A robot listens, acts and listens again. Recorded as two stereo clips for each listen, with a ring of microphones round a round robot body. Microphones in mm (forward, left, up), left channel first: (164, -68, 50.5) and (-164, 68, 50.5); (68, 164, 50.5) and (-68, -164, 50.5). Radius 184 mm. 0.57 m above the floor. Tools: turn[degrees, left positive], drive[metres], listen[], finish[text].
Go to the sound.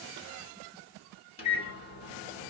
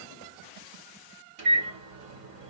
Thought: The microwave: 95° right.
Action: turn[-95]
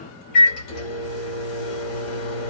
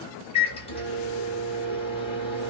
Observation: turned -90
Action: drive[1.0]
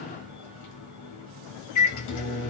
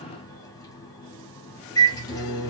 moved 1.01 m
Thought: The microwave is now 10° right.
Action: turn[-10]
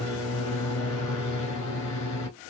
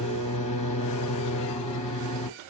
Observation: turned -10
Action: drive[1.0]
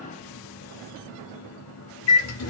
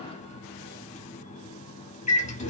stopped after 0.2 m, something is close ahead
Action: finish[Arrived at the microwave, straight ahead.]